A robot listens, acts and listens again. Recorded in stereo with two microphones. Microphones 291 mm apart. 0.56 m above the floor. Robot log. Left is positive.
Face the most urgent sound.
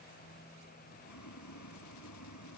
cmd idle
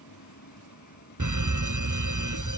cmd yaw -90
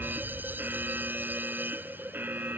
end: Facing the fire alarm.